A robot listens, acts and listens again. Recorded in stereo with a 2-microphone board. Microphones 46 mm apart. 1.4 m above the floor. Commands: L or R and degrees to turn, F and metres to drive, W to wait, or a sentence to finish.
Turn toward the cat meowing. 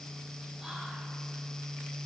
W
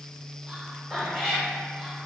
L30
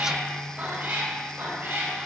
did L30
R50
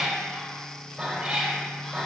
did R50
R10
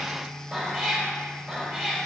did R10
Found it: a cat meowing, straight ahead.